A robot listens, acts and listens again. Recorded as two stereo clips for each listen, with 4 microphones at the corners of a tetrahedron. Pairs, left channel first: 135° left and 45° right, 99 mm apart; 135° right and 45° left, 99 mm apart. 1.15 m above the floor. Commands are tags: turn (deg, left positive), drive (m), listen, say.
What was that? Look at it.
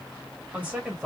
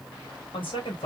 <turn deg="-115"/>
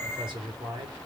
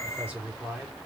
<turn deg="-35"/>
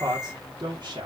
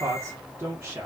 <turn deg="-25"/>
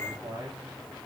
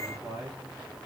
<say>Facing the man speaking, 1 to 2 m away.</say>